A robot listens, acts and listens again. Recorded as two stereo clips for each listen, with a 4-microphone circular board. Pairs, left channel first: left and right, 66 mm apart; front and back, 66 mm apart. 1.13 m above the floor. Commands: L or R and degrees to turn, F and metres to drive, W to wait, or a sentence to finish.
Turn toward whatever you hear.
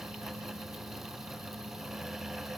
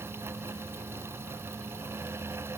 W
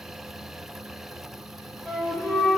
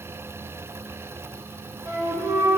L175
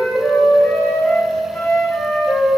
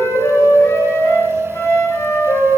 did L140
L30
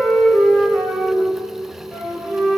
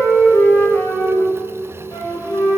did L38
Facing the flute.